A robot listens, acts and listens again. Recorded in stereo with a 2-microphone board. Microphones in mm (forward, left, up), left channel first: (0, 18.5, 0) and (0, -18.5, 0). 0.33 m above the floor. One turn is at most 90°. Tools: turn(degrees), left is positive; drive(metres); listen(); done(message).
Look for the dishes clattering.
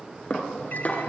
turn(degrees=35)
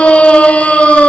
listen()
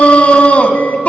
listen()
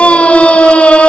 done("I heard dishes clattering, but can't make it out now. It was about straight ahead or 110° left.")